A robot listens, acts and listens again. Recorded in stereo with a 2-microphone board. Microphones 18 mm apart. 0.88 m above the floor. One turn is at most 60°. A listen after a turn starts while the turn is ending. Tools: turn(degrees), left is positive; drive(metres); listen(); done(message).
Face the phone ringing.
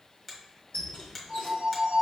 turn(degrees=55)
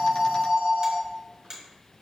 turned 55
turn(degrees=60)
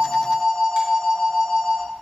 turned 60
done("Found it: a phone ringing, straight ahead, 1 to 2 m away.")